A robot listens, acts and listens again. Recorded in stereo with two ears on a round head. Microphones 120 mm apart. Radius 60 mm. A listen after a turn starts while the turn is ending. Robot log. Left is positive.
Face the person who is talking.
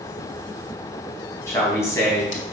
note: The man speaking: about 20° left or 160° left.
cmd yaw +20
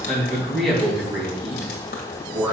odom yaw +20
end: Facing the man speaking.